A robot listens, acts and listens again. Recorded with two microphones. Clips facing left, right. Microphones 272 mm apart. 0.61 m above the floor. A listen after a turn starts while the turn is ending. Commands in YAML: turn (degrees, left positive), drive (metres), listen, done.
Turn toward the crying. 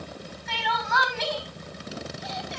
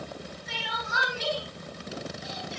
turn: 75
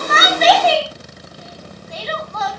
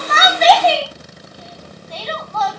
done: "Facing the crying, over 4 m away."